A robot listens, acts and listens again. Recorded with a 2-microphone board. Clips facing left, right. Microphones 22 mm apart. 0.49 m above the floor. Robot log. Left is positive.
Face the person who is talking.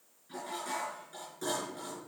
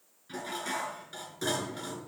cmd idle
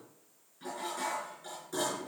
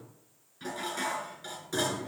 cmd idle
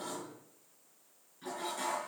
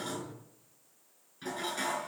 end: I can't make out anyone speaking to turn to.